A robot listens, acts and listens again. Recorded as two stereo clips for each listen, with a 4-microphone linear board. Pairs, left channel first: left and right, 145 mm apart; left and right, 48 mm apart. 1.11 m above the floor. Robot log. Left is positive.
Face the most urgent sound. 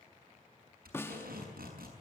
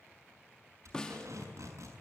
cmd idle
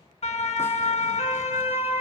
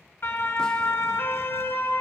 note: The siren: about 45° left or 135° left.
cmd yaw +45
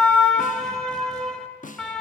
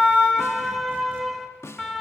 end: Found it: a siren, straight ahead, 2 to 4 m away.